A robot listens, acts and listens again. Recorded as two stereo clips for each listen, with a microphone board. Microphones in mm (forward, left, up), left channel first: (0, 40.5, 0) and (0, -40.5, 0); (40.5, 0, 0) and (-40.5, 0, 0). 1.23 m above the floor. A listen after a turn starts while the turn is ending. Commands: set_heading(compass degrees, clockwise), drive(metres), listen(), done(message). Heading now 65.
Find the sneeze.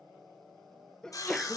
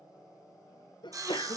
done("Found it: a sneeze, straight ahead, under 1 m away.")